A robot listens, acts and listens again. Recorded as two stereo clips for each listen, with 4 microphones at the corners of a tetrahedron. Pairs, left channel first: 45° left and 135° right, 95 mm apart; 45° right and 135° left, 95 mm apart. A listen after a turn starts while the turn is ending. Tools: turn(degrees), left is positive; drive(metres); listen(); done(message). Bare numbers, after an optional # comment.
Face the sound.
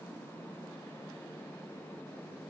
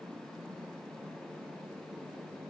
listen()
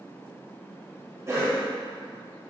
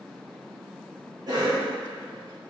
# The cough: 170° left.
turn(170)
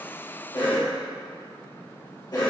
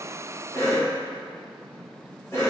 # The cough is now 10° left.
turn(10)
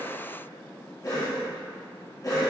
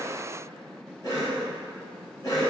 done("Found it: a cough, straight ahead, 1 to 2 m away.")